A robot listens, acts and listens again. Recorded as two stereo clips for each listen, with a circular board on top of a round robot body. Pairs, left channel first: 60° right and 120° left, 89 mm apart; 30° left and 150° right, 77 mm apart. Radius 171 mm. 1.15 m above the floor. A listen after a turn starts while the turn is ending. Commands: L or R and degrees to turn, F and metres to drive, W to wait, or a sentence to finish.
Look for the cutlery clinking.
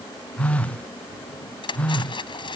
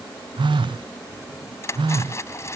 R25
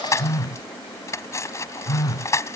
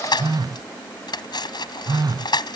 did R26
Facing the cutlery clinking.